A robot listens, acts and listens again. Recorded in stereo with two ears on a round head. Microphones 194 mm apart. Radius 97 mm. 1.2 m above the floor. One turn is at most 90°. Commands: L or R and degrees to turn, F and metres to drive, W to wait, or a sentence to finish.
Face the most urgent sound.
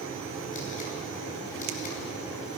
W
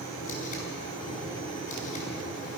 W
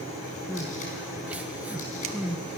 R30
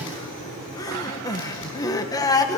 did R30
L20
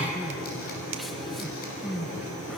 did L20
Facing the crying, 1 to 2 m away.